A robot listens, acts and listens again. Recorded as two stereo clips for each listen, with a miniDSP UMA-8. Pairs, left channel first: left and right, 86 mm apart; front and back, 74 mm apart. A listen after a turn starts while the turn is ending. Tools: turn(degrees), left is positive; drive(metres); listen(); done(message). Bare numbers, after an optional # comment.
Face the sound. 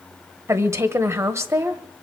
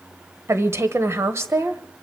# The woman speaking: 140° right.
turn(-140)
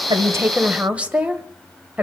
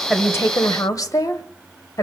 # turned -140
# The woman speaking is now 15° right.
turn(-15)
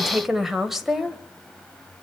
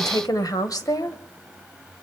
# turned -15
done("Facing the woman speaking, 1 to 2 m away.")